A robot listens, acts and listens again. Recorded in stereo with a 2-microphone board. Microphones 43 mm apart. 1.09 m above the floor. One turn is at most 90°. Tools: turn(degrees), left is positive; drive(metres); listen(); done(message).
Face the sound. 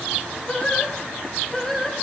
turn(degrees=30)
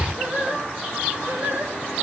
turn(degrees=-50)
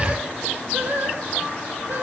turn(degrees=-55)
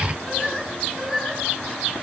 turn(degrees=-10)
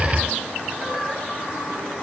listen()
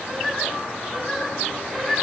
done("Found it: singing, straight ahead, 2 to 4 m away.")